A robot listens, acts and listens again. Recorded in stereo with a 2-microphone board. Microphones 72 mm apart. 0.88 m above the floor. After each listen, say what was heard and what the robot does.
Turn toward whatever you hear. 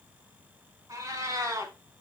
The cat meowing: about 45° right or 135° right. Turn 45° right.
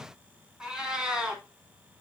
So it is at 10° right. Turn 10° right.
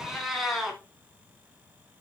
Found it: a cat meowing, straight ahead.